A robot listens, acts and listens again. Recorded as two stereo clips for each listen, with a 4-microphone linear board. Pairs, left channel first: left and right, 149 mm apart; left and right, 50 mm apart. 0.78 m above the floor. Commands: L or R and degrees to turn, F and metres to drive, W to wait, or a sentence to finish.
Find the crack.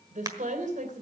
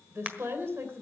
R25
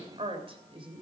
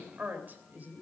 W
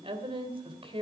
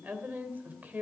I heard a crack, but can't make it out now. It was about straight ahead or 130° right.